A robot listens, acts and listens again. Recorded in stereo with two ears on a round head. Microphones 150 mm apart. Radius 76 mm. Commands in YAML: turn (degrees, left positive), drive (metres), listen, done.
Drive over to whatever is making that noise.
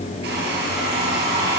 turn: -70
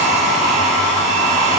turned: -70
turn: -45
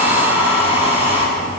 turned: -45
turn: -15
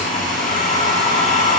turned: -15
drive: 1.0
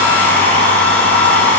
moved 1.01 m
turn: 10
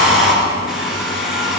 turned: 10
drive: 1.0
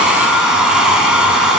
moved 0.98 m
drive: 1.0
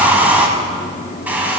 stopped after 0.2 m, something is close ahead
turn: -10
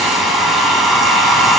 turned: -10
done: "I am next to the hair dryer."